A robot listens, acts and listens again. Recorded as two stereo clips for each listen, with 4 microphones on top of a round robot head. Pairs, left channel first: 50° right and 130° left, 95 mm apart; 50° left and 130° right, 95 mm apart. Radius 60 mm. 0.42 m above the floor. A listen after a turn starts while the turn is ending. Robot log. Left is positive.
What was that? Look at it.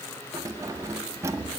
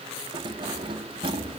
note: The keys jangling: 165° right.
cmd yaw -165
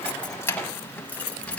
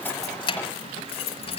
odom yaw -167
note: The keys jangling is now 30° left.
cmd yaw +30
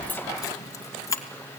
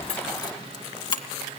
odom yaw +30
note: The keys jangling is now 10° left.
cmd yaw +10
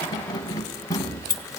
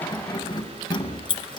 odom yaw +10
end: Found it: keys jangling, straight ahead.